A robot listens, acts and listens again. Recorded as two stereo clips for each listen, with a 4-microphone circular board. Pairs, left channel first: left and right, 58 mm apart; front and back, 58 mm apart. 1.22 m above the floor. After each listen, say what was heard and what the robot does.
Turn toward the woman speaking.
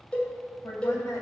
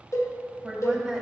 The woman speaking: 90° left. Turn 90° left.
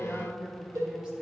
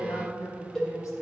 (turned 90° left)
The woman speaking is now 15° right. Turn 15° right.
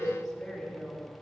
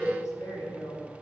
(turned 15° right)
Found it: a woman speaking, straight ahead, 2 to 4 m away.